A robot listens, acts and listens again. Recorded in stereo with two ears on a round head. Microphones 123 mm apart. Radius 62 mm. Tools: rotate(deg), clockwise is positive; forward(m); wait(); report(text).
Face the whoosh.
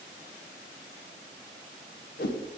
rotate(-70)
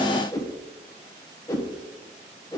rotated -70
rotate(-25)
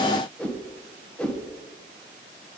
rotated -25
rotate(-10)
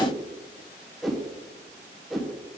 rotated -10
report("Facing the whoosh.")